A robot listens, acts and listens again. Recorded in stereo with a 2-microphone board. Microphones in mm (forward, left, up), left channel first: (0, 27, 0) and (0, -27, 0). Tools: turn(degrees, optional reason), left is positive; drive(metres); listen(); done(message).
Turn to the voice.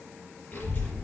turn(degrees=45, reason="The child speaking: about 45° left or 135° left.")
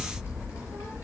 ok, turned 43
turn(degrees=90, reason="So it is at 90° left.")
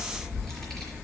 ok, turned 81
turn(degrees=10, reason="The child speaking is now 10° left.")
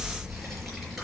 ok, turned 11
done("Found it: a child speaking, straight ahead, over 4 m away.")